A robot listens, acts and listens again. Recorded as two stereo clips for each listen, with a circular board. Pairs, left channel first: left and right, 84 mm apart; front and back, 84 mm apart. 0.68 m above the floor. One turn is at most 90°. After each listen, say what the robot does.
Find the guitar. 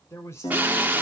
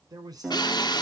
Turn 90° left.
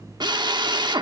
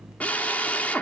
Turn 10° left.
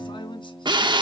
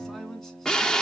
Turn 40° left.
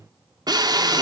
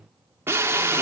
Keep listening.
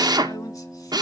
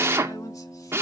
Found it: a guitar, straight ahead.